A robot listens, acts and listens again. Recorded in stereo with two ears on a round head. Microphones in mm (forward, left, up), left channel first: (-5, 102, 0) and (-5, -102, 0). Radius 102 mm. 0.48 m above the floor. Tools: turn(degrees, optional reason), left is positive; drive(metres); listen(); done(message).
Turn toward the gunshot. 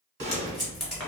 turn(degrees=-50, reason="The gunshot: about 50° right or 130° right.")
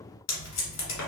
listen()
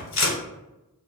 done("I heard a gunshot, but can't make it out now. It was about straight ahead or 80° right.")